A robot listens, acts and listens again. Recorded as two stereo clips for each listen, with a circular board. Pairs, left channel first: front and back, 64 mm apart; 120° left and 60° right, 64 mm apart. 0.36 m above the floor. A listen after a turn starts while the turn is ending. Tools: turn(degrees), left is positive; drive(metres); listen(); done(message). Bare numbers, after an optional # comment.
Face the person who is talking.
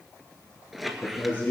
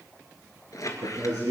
# The man speaking: 55° right.
turn(-55)
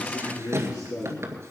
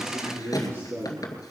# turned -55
# The man speaking is now 15° right.
turn(-15)
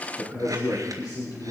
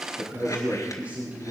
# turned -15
done("Found it: a man speaking, straight ahead, over 4 m away.")